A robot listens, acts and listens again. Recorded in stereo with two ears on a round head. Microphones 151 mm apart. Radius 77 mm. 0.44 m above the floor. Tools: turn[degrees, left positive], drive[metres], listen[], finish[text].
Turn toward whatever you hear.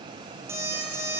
Thought: The alarm clock: about 15° right or 165° right.
Action: turn[-15]
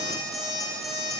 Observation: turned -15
Action: finish[Found it: an alarm clock, straight ahead, over 4 m away.]